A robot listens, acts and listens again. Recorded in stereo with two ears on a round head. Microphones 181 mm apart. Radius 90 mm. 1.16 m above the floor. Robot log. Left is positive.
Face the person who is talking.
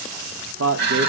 note: The man speaking: about 65° right or 115° right.
cmd yaw -65
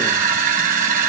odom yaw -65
cmd idle
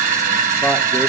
cmd idle
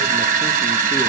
end: I heard a man speaking, but can't make it out now. It was about straight ahead or 50° right.